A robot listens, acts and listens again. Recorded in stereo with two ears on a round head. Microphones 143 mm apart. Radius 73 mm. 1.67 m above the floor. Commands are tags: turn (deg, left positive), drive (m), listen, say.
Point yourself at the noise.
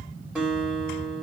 <turn deg="-30"/>
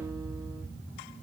<listen/>
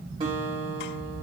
<turn deg="-145"/>
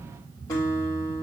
<turn deg="20"/>
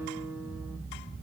<say>Found it: a guitar, straight ahead.</say>